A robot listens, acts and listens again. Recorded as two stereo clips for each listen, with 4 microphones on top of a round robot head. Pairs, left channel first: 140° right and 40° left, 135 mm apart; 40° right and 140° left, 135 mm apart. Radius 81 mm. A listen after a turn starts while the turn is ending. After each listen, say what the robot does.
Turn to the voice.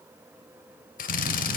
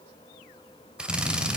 Keep listening.
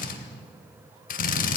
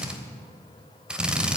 Keep listening.
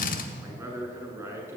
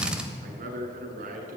Turn 110° left.
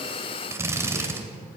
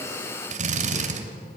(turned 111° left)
Keep listening.
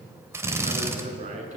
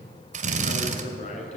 Facing the man speaking, over 4 m away.